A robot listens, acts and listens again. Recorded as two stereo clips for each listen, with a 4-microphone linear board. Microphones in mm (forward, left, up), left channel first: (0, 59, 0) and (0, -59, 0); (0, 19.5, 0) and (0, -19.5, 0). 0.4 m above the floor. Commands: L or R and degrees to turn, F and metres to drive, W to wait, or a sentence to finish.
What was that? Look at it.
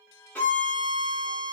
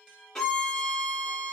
L30
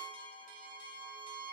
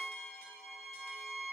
R20
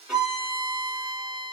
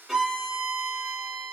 Facing the violin, 1 to 2 m away.